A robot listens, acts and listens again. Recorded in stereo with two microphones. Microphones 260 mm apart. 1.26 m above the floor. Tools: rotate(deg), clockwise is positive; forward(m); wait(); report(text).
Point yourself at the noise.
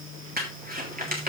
rotate(35)
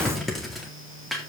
report("Facing the crumpling.")